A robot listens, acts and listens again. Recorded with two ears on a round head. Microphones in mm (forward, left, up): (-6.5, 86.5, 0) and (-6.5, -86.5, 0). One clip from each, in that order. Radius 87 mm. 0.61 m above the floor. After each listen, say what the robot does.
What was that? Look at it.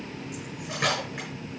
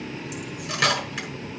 Turn 90° right.
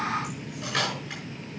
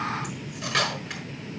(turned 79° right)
Turn 10° right.
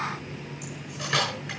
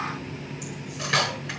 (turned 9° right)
Found it: cutlery clinking, straight ahead.